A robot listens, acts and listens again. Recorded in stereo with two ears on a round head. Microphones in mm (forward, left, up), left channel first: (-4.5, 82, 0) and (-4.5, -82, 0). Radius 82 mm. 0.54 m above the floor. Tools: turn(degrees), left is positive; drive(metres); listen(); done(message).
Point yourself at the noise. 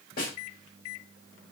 turn(degrees=50)
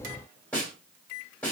turn(degrees=10)
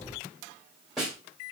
done("Found it: a snare drum, straight ahead.")